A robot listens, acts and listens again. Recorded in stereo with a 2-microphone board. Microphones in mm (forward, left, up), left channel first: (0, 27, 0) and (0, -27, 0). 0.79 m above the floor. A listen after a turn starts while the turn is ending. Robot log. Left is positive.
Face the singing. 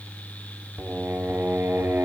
note: The singing: about 55° right or 125° right.
cmd yaw -55
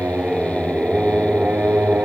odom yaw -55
note: So it is at 30° right.
cmd yaw -30
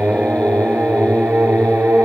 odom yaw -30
note: The singing is now 40° right.
cmd yaw -40
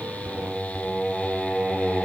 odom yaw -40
end: Found it: singing, straight ahead.